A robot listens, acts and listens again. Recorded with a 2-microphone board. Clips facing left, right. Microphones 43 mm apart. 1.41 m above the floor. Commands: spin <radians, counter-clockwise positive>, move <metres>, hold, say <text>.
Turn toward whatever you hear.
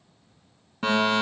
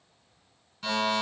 spin 0.96
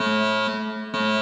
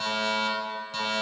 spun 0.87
spin 1.05
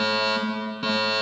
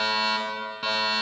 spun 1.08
say Facing the fire alarm, 1 to 2 m away.